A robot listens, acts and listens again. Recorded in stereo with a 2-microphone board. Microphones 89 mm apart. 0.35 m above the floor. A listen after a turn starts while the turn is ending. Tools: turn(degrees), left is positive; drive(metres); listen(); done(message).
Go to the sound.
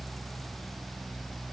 listen()
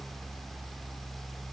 listen()
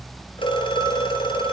turn(degrees=70)
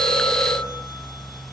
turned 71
listen()
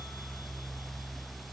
listen()
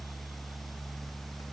done("I heard a phone ringing, but can't make it out now. It was about straight ahead or 40° left. I did not reach it.")